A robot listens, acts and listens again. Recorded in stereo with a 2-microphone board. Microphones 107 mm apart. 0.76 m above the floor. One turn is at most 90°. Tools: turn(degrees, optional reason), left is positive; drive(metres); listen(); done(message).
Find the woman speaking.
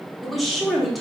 turn(degrees=30)
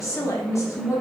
turn(degrees=90, reason="So it is at 145° left.")
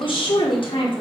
turn(degrees=60, reason="The woman speaking is now 60° left.")
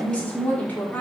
turn(degrees=15, reason="The woman speaking is now 15° left.")
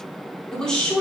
done("Found it: a woman speaking, straight ahead, 1 to 2 m away.")